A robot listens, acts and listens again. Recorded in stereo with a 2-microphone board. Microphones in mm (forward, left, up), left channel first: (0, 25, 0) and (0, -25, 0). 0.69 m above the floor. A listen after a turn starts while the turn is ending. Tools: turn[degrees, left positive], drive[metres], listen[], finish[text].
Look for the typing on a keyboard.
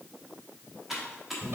Action: turn[-30]
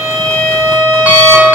Action: listen[]
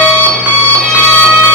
Action: listen[]
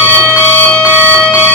Action: finish[I heard typing on a keyboard, but can't make it out now. It was about 25° left or 145° right.]